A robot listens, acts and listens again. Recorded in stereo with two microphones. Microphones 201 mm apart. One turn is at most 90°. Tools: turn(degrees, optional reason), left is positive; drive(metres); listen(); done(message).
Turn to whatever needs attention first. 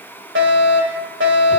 turn(degrees=-90)
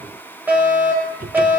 turn(degrees=-10, reason="So it is at 10° right.")
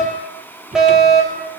done("Facing the fire alarm, over 4 m away.")